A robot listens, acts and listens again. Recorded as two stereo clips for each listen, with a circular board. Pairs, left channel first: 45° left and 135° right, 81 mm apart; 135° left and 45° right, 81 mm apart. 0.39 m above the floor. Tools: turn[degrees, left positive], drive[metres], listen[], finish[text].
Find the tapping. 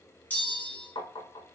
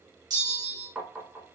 Thought: The tapping: 35° left.
Action: turn[35]
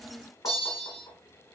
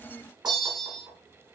Action: finish[Found it: tapping, straight ahead.]